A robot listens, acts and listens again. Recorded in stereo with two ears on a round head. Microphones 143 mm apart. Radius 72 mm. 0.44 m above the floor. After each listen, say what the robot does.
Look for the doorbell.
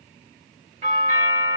Turn 50° right.
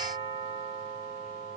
Turn 70° right.
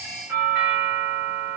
Turn 15° right.
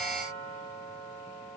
Found it: a doorbell, straight ahead, 2 to 4 m away.